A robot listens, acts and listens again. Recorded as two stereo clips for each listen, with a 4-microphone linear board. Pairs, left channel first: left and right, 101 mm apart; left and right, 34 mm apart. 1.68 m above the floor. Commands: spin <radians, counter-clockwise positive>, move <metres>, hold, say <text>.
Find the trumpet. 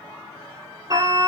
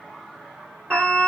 spin -0.96
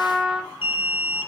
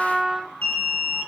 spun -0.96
say Found it: a trumpet, straight ahead.